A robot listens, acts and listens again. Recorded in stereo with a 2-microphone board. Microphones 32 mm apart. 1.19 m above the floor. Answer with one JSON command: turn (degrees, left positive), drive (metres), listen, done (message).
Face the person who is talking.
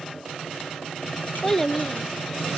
{"turn": 30}
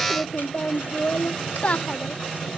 {"turn": 140}
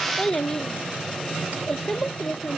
{"turn": 15}
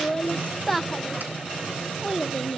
{"done": "Facing the child speaking."}